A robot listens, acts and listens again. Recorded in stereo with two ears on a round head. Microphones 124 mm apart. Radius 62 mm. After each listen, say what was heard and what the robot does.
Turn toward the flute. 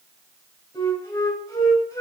The flute: about 20° left or 160° left. Turn 20° left.
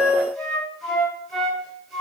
Found it: a flute, straight ahead, 2 to 4 m away.